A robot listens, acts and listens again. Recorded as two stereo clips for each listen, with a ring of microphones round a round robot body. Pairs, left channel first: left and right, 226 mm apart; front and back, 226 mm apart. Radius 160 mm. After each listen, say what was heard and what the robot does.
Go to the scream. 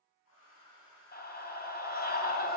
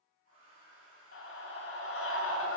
The scream: 50° left. Turn 50° left.
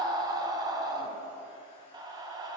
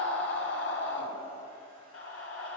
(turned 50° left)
The scream is now 20° right. Turn 20° right.
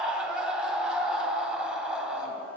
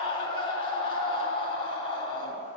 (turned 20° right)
Drive 1.0 m forward.
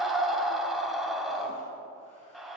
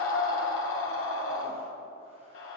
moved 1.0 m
Drive 1.0 m forward.
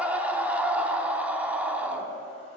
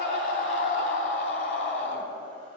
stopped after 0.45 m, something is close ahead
Arrived at the scream, straight ahead.